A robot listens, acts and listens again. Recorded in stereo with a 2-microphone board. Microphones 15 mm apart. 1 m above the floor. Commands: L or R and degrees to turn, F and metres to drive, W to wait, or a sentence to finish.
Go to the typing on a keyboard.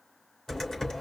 L45
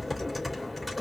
F1.0
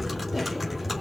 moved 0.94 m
F1.0
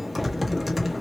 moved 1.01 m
R10
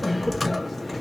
F1.0
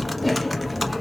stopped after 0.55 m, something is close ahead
I am next to the typing on a keyboard.